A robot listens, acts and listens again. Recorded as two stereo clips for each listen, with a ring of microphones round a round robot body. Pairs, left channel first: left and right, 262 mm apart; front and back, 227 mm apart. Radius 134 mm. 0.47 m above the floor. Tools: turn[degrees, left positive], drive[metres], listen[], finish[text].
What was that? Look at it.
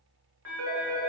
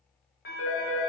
Thought: The phone ringing: 50° right.
Action: turn[-50]
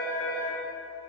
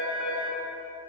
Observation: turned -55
Action: finish[Facing the phone ringing, 1 to 2 m away.]